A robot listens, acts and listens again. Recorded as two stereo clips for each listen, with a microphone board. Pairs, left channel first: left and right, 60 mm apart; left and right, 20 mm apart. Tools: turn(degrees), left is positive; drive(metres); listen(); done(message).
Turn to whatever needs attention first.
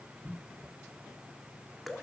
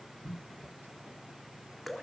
listen()
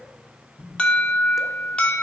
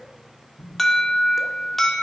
turn(degrees=20)
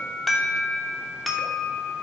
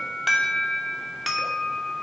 done("Facing the alarm, 2 to 4 m away.")